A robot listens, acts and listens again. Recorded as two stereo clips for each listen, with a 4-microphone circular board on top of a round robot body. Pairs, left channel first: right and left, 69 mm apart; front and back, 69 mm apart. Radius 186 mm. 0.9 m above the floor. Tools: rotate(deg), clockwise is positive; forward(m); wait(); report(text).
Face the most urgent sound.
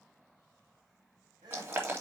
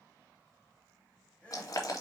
rotate(-75)
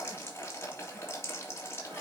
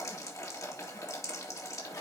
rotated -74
wait()
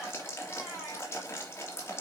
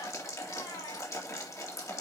report("Facing the crying, 2 to 4 m away.")